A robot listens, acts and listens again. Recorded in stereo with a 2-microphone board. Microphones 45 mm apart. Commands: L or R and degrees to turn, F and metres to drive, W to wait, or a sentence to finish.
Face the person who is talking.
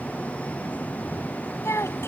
L90
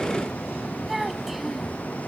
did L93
Facing the child speaking.